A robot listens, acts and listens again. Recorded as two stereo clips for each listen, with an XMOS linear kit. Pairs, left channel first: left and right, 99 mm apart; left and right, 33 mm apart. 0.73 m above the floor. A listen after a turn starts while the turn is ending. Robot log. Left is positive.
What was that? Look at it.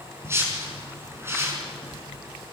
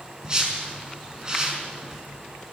note: The whoosh: about 25° right or 155° right.
cmd yaw -25
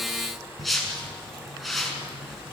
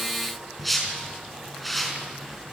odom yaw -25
end: Found it: a whoosh, straight ahead, over 4 m away.